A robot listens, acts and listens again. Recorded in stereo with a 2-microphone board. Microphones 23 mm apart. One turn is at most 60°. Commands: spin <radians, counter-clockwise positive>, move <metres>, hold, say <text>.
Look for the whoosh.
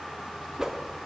spin -0.44
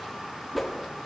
say Facing the whoosh, 1 to 2 m away.